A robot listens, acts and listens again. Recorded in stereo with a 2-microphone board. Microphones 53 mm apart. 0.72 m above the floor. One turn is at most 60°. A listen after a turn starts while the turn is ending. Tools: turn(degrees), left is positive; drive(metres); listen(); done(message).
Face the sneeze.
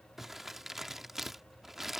listen()
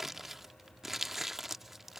listen()
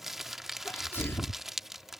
turn(degrees=45)
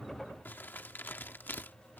listen()
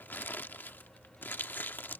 done("I heard a sneeze, but can't make it out now. It was about straight ahead or 90° left.")